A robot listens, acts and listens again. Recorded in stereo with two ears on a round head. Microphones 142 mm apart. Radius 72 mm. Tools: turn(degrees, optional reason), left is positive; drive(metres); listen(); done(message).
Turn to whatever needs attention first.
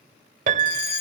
turn(degrees=70, reason="The fire alarm: about 70° left or 110° left.")
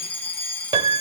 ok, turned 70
turn(degrees=10, reason="So it is at 10° left.")
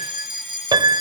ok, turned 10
done("Found it: a fire alarm, straight ahead, over 4 m away.")